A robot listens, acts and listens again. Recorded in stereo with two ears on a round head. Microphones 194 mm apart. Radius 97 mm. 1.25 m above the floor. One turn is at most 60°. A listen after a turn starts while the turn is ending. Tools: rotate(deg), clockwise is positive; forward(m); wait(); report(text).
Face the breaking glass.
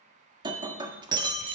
rotate(20)
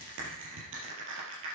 wait()
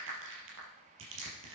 report("I heard breaking glass, but can't make it out now. It was about straight ahead or 140° right.")